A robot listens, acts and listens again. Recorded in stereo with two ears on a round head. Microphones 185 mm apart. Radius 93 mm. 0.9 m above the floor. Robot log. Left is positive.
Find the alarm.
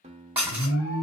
cmd yaw +90
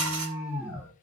end: Found it: an alarm, straight ahead.